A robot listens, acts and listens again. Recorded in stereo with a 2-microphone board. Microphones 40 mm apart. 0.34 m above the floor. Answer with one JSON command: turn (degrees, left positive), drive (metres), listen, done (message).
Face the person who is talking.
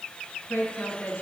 {"turn": 75}
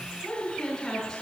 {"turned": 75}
{"turn": 10}
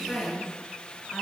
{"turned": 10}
{"done": "Found it: a woman speaking, straight ahead, over 4 m away."}